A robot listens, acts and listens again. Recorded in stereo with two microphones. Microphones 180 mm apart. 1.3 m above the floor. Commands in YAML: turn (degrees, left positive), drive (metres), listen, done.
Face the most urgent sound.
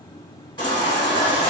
turn: 25
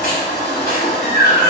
turn: 130
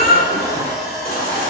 turn: 55
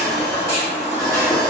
turn: 15
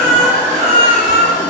done: "Found it: a baby crying, straight ahead, 1 to 2 m away."